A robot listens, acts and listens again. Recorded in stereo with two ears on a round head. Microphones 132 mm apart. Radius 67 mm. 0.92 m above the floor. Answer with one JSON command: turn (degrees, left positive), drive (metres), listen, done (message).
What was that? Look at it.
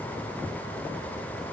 {"listen": true}
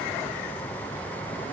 {"listen": true}
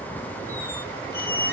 {"turn": 15}
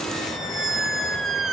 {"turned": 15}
{"done": "Facing the squeak."}